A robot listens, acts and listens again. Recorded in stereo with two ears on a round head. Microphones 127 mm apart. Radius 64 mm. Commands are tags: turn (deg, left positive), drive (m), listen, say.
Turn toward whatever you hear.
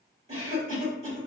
<turn deg="-40"/>
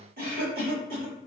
<turn deg="-95"/>
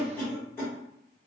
<turn deg="10"/>
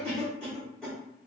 <say>Facing the cough.</say>